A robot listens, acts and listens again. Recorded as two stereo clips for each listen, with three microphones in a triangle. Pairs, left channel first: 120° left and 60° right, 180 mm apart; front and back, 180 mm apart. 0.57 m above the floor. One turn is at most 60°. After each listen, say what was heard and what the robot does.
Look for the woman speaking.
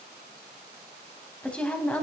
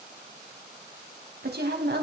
The woman speaking: 160° right. Turn 60° right.
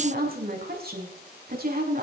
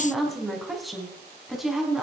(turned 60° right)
The woman speaking is now 90° right. Turn 60° right.
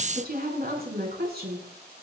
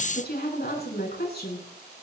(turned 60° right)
The woman speaking is now 30° right. Turn 30° right.
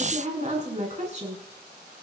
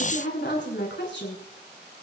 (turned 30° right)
The woman speaking is now 10° right. Turn 10° right.
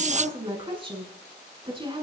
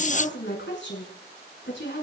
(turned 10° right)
Found it: a woman speaking, straight ahead.